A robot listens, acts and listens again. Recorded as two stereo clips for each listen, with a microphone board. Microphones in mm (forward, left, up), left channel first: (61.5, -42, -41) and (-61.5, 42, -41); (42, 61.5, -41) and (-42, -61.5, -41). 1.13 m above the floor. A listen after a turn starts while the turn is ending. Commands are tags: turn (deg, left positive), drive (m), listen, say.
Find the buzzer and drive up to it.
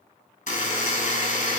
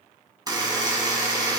<turn deg="-60"/>
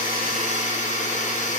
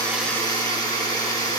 <turn deg="-10"/>
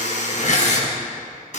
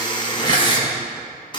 <drive m="1.0"/>
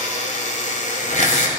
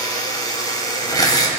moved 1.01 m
<turn deg="-10"/>
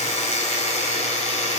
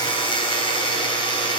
<drive m="1.0"/>
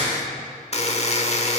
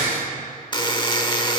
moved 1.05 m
<drive m="1.0"/>
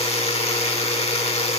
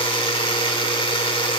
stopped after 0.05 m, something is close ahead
<say>Arrived at the buzzer, straight ahead.</say>